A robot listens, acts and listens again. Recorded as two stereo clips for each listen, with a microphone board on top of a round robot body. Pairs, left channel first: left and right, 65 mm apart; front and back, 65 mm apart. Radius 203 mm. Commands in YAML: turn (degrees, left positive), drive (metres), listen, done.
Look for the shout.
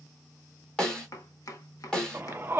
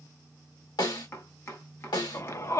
turn: -35
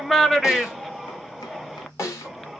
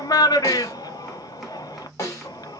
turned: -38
done: "Found it: a shout, straight ahead, 1 to 2 m away."